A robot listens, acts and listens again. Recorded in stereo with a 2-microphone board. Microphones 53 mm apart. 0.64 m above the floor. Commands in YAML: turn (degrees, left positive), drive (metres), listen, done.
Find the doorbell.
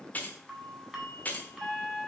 turn: -30
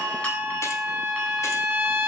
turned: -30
turn: 25
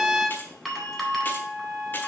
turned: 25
done: "Found it: a doorbell, straight ahead."